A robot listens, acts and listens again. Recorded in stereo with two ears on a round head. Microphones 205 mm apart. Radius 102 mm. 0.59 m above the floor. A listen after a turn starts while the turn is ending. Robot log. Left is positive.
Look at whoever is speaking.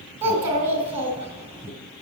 note: The child speaking: about 25° right or 155° right.
cmd yaw -25
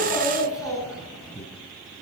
end: Found it: a child speaking, straight ahead, 2 to 4 m away.